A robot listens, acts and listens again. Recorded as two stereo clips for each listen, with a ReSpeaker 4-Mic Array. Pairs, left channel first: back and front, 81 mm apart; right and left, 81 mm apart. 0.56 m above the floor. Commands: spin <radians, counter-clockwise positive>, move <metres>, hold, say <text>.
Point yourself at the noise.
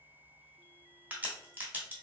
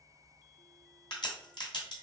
spin -1.22
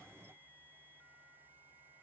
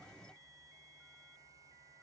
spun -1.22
say I heard a crack from this way, but can't make it out now.